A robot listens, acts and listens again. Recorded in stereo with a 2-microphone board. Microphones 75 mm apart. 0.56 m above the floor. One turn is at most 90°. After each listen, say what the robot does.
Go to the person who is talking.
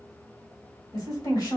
Turn 70° left.
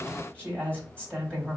Turn 15° left.
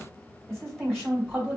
Drive 1.0 m forward.
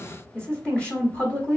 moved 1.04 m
Turn 20° left.
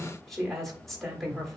Drive 1.0 m forward.
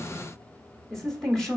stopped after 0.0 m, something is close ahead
Turn 10° left.
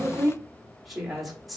I am next to the woman speaking.